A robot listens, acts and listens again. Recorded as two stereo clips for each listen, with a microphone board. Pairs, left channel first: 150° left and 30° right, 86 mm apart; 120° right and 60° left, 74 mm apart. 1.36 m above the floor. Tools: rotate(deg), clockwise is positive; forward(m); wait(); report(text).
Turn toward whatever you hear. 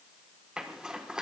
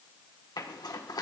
rotate(110)
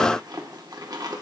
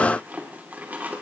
report("Found it: a zipper, straight ahead.")